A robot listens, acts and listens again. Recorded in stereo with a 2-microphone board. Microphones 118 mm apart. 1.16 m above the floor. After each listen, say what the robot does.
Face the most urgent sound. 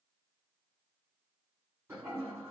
Keep listening.
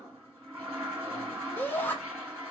Turn 15° left.
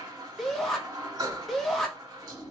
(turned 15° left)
Facing the shout.